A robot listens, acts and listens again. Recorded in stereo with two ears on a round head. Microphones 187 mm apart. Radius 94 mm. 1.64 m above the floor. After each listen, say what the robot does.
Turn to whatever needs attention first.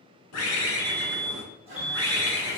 Turn 30° left.
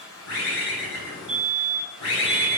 Turn 150° left.
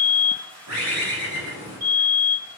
Turn 25° right.
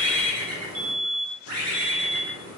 Turn 15° right.
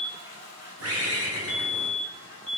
Facing the fire alarm.